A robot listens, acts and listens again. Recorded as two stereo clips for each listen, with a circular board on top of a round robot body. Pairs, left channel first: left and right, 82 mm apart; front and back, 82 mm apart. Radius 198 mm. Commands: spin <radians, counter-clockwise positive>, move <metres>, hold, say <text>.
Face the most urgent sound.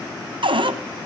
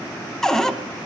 hold
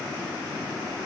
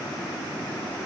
hold
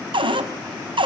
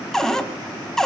say I can't make out anything urgent, only a cupboard door.